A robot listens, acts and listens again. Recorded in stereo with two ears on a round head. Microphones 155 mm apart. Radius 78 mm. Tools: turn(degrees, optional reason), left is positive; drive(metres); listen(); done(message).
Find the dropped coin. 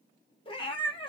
listen()
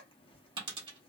turn(degrees=-25, reason="The dropped coin: about 25° right or 155° right.")
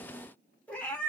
listen()
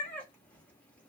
done("I heard a dropped coin, but can't make it out now. It was about straight ahead or 130° right.")